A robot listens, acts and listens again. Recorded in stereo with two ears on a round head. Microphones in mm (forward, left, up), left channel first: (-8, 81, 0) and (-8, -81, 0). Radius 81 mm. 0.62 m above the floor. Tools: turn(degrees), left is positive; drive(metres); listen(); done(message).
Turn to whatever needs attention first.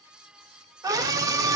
turn(degrees=-20)
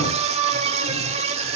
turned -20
turn(degrees=-140)
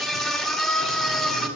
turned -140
done("Found it: a scream, straight ahead.")